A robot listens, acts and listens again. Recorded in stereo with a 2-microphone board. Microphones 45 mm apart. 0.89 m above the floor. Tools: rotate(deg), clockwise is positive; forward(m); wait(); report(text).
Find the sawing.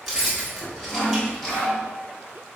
rotate(-90)
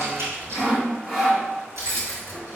rotate(10)
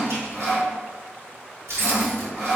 report("Found it: sawing, straight ahead.")